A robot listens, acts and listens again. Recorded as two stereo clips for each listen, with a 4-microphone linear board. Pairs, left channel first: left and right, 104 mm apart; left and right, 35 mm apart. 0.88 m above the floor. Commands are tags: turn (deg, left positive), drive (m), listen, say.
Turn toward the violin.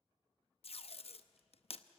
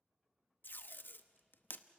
<listen/>
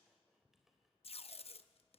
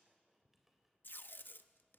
<listen/>
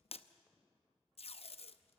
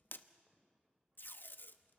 <say>I can't make out a violin, only tape being pulled and a squeak.</say>